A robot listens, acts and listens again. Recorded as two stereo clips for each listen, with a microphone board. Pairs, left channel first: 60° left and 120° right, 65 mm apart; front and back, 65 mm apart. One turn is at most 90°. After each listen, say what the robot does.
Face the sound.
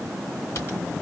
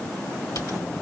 Turn 20° left.
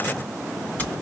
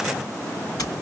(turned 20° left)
Found it: typing on a keyboard, straight ahead.